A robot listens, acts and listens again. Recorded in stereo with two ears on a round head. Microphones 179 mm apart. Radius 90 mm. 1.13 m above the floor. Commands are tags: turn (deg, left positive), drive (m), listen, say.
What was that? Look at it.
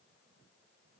<listen/>
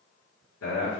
<turn deg="65"/>
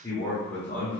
<turn deg="10"/>
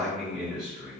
<turn deg="-10"/>
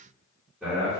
<turn deg="-10"/>
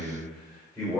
<turn deg="-10"/>
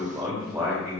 <say>Found it: a man speaking, straight ahead.</say>